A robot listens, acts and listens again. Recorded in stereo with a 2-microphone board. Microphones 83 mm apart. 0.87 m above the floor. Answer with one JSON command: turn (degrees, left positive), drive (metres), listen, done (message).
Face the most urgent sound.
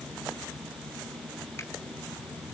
{"listen": true}
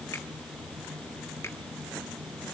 {"listen": true}
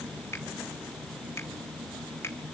{"done": "I can't make out anything urgent, only a finger snap."}